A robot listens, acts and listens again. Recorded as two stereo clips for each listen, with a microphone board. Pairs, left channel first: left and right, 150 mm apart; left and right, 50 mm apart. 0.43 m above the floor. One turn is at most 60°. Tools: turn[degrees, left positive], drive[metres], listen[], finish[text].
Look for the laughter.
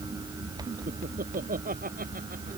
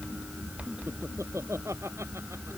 Thought: The laughter: about 75° right or 105° right.
Action: turn[-60]
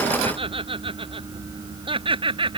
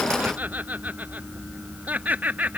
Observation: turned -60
Thought: So it is at 35° right.
Action: turn[-35]
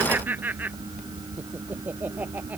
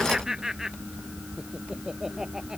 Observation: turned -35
Thought: The laughter is now 10° right.
Action: turn[-10]
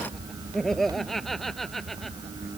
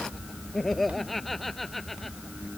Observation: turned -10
Action: finish[Facing the laughter.]